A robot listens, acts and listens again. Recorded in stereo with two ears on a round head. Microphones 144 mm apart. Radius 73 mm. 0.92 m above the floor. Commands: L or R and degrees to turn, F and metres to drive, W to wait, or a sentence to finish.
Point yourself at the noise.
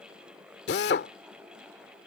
L90
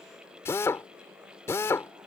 L15
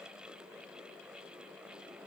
W
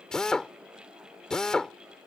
Found it: a drill, straight ahead.